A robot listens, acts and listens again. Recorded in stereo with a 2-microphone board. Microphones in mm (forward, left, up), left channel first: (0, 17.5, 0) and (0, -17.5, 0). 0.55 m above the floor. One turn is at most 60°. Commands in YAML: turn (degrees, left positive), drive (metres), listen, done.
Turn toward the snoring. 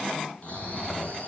turn: 40
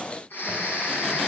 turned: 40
turn: 60
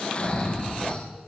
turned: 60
turn: 35
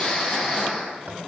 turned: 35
done: "Found it: snoring, straight ahead."